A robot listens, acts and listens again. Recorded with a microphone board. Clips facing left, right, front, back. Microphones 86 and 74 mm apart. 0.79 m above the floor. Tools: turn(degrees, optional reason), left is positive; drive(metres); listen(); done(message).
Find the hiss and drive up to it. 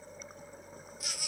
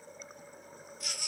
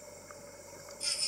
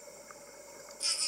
listen()
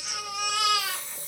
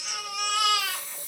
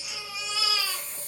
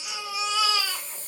turn(degrees=35, reason="The hiss: 35° left.")
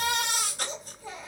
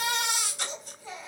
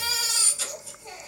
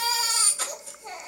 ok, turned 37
listen()
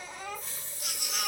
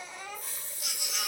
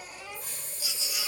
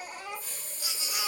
drive(metres=1.0)
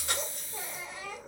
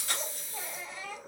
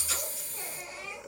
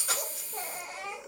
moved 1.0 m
drive(metres=1.0)
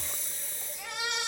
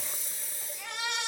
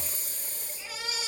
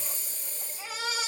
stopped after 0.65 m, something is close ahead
done("I am next to the hiss.")